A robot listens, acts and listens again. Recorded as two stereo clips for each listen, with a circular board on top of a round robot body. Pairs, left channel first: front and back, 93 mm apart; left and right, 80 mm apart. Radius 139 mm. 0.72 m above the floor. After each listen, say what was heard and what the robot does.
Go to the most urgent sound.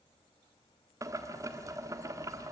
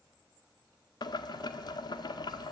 Keep listening.
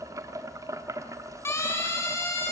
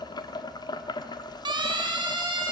The siren: 60° right. Turn 60° right.
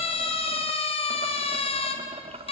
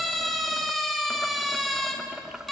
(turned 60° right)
Drive 1.0 m forward.
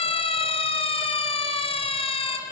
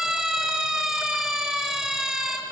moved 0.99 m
Drive 1.0 m forward.
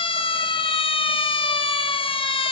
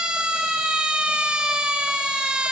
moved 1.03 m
Drive 1.0 m forward.
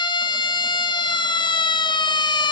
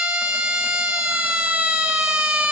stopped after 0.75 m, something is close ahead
The siren is now 15° right. Turn 15° right.
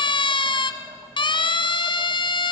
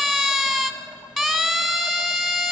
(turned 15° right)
I am next to the siren.